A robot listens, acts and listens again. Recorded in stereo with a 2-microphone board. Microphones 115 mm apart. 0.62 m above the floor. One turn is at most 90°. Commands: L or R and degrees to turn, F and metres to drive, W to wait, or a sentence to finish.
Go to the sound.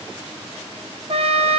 R55
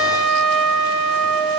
F1.0
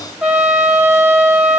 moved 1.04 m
F1.0
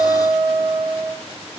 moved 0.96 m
R15
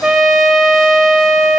F1.0
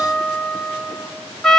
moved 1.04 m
F1.0
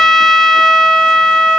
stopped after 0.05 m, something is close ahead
I am next to the trumpet.